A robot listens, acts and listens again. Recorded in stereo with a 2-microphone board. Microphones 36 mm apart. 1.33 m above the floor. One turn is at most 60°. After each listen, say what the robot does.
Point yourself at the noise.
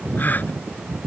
Turn 55° left.
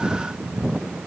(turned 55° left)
Keep listening.
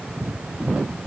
I heard a gasp, but can't make it out now. It was about straight ahead or 70° left.